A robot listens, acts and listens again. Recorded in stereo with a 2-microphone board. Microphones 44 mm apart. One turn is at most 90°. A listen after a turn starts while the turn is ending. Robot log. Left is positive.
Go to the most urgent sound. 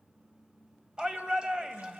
note: The shout: about 25° right or 155° right.
cmd yaw -25
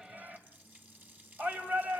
note: So it is at 130° right.
cmd yaw -90
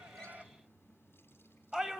note: The shout is now 15° right.
cmd yaw -15
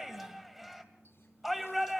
cmd fwd 1.0
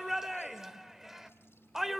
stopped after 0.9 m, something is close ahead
note: The shout is now 10° right.
cmd yaw -10
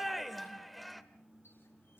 end: I am next to the shout.